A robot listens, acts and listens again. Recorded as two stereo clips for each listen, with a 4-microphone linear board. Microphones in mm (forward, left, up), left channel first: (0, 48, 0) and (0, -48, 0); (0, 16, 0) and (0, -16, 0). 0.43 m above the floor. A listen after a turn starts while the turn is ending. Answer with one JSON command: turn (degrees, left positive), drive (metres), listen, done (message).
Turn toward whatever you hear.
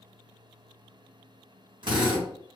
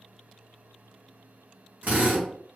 {"turn": -55}
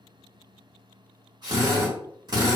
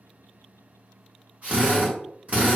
{"turn": -55}
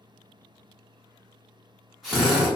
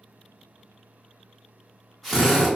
{"done": "Found it: a drill, straight ahead."}